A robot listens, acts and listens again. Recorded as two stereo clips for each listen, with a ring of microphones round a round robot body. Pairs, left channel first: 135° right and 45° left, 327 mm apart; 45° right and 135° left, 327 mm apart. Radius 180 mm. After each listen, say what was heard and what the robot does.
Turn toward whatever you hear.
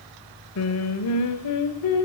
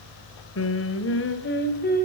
The singing: 110° right. Turn 110° right.
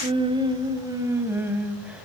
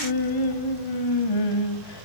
The singing is now 40° right. Turn 40° right.
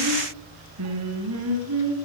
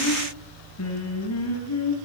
Found it: singing, straight ahead.